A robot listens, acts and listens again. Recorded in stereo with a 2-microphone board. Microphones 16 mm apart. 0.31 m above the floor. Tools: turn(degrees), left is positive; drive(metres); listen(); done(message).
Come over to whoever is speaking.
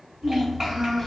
turn(degrees=-35)
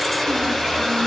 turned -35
listen()
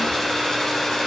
listen()
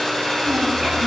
turn(degrees=-105)
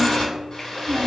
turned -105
turn(degrees=-35)
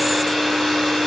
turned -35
listen()
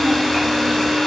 listen()
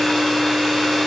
done("I heard a child speaking from this way, but can't make it out now. I did not reach it.")